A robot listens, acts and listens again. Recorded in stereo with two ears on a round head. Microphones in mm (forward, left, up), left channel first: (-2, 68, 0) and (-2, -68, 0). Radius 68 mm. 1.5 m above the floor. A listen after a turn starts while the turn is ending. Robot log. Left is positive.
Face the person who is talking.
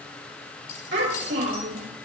cmd yaw -90
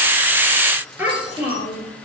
note: So it is at 15° right.
cmd yaw -15
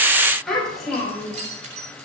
end: Facing the child speaking.